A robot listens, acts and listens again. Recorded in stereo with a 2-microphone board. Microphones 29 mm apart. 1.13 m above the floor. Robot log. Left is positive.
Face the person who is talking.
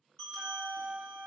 cmd idle
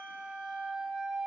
cmd idle
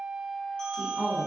cmd yaw +90
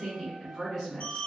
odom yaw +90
end: Found it: a woman speaking, straight ahead, 1 to 2 m away.